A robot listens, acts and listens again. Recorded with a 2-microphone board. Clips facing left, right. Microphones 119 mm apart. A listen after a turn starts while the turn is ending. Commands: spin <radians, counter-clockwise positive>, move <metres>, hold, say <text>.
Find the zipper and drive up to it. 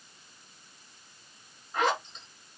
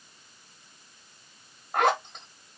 spin -1.13
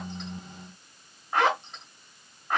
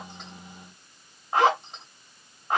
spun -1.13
spin -0.44
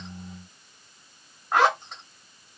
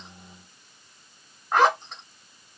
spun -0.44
move 1.0
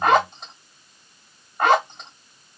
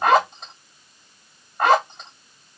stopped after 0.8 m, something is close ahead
say Arrived at the zipper, straight ahead.